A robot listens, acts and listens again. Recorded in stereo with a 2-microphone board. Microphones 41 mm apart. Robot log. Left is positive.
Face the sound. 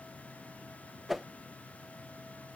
cmd yaw +30
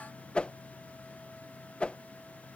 note: So it is at 150° left.
cmd yaw +150
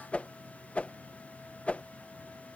note: The whoosh is now 30° left.
cmd yaw +30
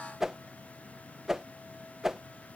note: The whoosh is now 10° right.
cmd yaw -10
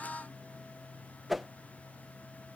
end: Facing the whoosh.